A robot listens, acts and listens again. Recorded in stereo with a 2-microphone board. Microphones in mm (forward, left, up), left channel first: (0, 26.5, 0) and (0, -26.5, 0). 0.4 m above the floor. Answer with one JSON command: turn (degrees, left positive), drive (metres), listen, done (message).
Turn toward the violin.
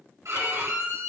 {"turn": -90}
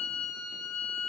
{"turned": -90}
{"turn": -10}
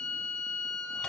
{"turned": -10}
{"done": "Facing the violin."}